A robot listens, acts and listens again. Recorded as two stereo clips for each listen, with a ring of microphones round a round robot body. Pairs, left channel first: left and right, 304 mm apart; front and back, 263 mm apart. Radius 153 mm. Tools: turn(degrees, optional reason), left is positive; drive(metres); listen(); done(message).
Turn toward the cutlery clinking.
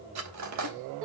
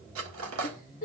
turn(degrees=-130, reason="The cutlery clinking: 130° right.")
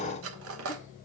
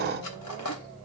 turn(degrees=-45, reason="The cutlery clinking is now 45° right.")
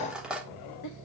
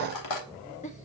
done("Facing the cutlery clinking.")